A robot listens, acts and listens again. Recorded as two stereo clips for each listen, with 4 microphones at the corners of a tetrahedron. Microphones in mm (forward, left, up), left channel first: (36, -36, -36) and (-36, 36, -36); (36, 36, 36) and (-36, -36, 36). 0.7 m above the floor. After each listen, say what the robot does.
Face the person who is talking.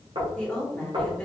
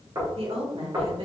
Turn 125° right.
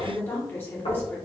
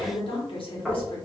Turn 20° left.
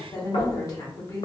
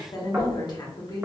Facing the woman speaking, 1 to 2 m away.